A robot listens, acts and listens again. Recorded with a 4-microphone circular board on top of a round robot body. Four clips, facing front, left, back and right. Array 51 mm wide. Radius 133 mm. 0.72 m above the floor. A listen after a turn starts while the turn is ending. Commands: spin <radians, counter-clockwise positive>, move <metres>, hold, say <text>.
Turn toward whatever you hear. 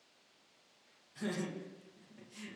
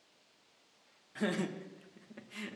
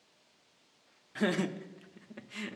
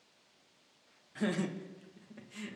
spin 2.88
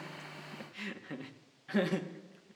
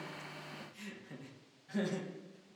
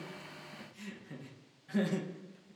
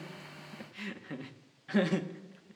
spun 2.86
spin -1.13
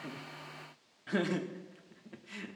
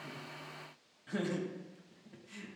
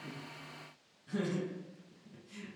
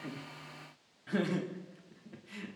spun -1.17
spin -0.35
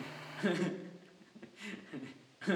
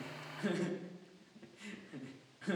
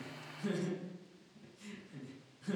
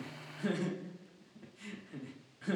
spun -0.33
say Facing the laughter, 1 to 2 m away.